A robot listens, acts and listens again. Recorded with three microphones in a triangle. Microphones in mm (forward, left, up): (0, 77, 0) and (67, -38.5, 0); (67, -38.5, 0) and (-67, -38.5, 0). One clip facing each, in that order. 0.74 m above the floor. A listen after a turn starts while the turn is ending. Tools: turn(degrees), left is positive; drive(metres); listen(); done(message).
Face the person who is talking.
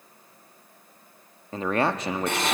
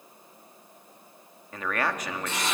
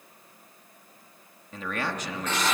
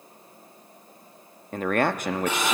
turn(degrees=175)
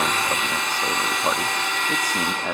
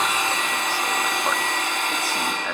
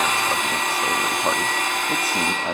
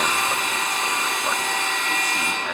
turn(degrees=50)
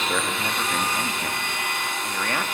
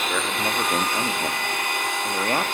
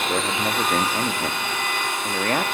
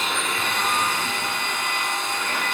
turn(degrees=-10)
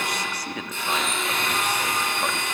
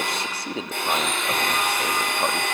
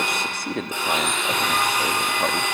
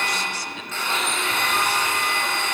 done("Facing the man speaking, 1 to 2 m away.")